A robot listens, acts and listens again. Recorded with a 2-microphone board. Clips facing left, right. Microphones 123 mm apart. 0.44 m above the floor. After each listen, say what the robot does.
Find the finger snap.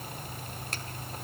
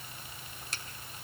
Turn 55° left.
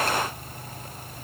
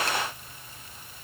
Keep listening.
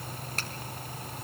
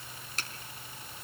Turn 60° left.
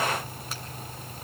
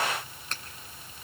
Turn 10° left.
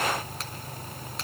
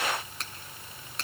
Found it: a finger snap, straight ahead, 1 to 2 m away.